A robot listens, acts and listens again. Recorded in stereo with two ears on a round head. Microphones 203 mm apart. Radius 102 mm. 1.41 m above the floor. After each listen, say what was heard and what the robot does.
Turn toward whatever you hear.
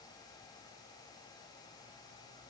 Keep listening.
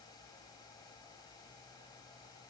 Keep listening.
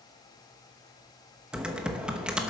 Turn 30° right.
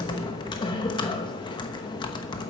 So it is at 25° left. Turn 25° left.
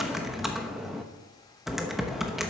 Found it: typing on a keyboard, straight ahead.